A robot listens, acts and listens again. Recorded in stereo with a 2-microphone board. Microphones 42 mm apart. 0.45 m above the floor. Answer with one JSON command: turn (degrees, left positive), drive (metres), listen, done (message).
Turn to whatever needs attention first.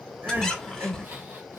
{"turn": -55}
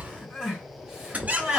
{"turn": -20}
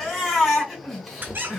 {"done": "Found it: crying, straight ahead, 2 to 4 m away."}